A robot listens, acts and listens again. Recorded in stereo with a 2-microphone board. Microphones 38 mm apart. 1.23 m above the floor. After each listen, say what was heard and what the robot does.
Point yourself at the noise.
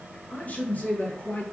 The man speaking: about 35° left or 145° left. Turn 35° left.
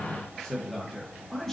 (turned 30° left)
Facing the man speaking.